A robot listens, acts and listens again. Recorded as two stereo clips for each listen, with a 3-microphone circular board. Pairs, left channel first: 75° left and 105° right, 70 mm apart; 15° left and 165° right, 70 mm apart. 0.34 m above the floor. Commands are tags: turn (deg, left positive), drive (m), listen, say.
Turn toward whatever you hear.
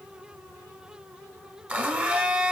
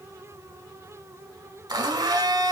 <turn deg="-175"/>
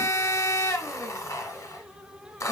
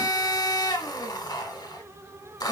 <turn deg="35"/>
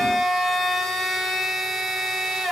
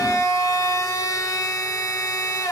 <turn deg="-10"/>
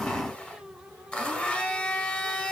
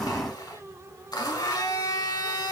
<say>Facing the blender, under 1 m away.</say>